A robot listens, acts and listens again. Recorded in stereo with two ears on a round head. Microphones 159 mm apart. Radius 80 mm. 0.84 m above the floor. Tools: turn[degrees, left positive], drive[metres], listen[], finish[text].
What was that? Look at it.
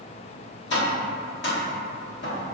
Thought: The tapping: about 65° left or 115° left.
Action: turn[65]
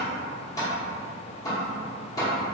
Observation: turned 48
Thought: So it is at 20° left.
Action: turn[20]
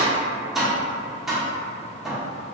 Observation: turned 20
Action: finish[Facing the tapping.]